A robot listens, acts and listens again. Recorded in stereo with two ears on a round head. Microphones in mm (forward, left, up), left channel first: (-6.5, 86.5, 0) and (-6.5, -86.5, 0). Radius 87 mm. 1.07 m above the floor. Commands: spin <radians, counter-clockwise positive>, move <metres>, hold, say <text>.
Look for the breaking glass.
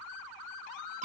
hold
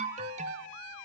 hold
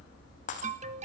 spin 0.70
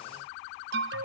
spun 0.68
hold
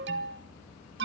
say I heard breaking glass, but can't make it out now. It was about straight ahead or 100° left.